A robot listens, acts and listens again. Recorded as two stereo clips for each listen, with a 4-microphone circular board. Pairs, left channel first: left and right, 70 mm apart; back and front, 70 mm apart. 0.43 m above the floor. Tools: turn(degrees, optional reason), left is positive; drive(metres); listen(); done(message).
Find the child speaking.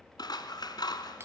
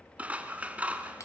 listen()
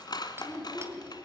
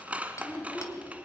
turn(degrees=120, reason="The child speaking: 120° left.")
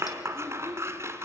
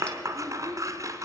turn(degrees=15, reason="The child speaking is now 15° left.")
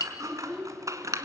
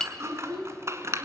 turn(degrees=15, reason="The child speaking is now 15° left.")
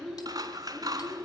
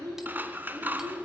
done("Facing the child speaking.")